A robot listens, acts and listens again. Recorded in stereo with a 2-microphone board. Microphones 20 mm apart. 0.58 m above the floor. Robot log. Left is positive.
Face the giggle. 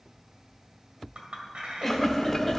cmd yaw +30
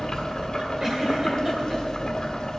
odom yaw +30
cmd idle
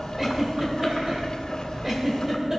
note: So it is at 25° right.
cmd yaw -25
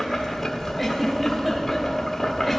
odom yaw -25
end: Found it: a giggle, straight ahead, 1 to 2 m away.